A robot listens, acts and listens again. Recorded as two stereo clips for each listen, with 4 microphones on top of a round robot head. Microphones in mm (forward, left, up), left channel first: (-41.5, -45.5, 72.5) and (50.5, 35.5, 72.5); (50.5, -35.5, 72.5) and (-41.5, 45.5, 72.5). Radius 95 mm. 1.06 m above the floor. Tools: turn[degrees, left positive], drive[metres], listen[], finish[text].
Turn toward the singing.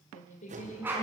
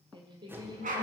Thought: The singing: 165° right.
Action: turn[-165]
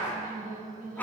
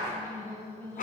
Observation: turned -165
Thought: The singing is now 35° left.
Action: turn[35]
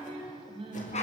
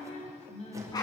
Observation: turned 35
Action: finish[Found it: singing, straight ahead, over 4 m away.]